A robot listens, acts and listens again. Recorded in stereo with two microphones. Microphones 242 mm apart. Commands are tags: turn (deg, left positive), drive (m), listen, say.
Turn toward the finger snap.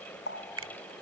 <turn deg="-70"/>
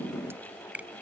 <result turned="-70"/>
<say>Found it: a finger snap, straight ahead.</say>